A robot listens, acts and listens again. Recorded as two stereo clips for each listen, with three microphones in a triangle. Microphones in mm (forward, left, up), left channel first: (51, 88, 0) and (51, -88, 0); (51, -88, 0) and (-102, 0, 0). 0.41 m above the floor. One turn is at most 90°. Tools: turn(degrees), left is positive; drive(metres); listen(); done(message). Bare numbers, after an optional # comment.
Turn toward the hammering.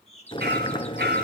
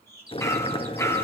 # The hammering: 105° right.
turn(-90)
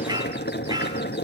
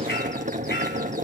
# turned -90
# The hammering is now 25° right.
turn(-25)
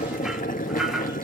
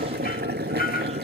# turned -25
done("Found it: hammering, straight ahead.")